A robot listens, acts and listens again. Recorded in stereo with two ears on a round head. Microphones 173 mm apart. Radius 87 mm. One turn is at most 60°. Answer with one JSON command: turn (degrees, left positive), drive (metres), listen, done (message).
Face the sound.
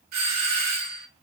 {"turn": -55}
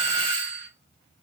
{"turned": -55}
{"turn": -60}
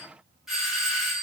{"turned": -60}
{"done": "Found it: a doorbell, straight ahead."}